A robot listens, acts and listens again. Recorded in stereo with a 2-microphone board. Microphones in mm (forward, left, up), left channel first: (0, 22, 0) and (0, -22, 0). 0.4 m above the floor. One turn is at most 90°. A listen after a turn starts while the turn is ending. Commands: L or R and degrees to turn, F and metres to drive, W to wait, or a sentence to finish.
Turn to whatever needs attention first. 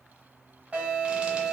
R35
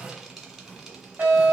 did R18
R90
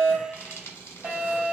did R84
R35
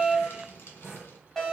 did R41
Facing the alarm, 1 to 2 m away.